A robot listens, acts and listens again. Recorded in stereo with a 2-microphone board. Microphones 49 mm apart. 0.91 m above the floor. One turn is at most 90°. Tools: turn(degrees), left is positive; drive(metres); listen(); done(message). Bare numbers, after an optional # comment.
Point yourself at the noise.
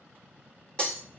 # The breaking glass: about 25° left or 155° left.
turn(25)
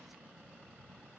listen()
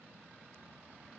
done("I heard breaking glass, but can't make it out now. It was about straight ahead or 130° left.")